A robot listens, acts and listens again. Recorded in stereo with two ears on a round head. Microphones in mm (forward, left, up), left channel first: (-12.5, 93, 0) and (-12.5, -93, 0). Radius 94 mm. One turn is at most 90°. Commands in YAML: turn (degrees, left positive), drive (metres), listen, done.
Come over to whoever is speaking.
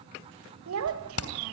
turn: -90
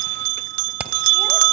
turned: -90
listen: true
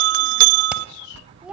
drive: 1.0
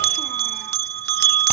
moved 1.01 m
listen: true
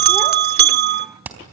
listen: true
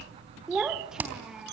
drive: 1.0
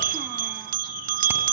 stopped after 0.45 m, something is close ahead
listen: true
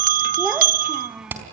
done: "I am next to the child speaking."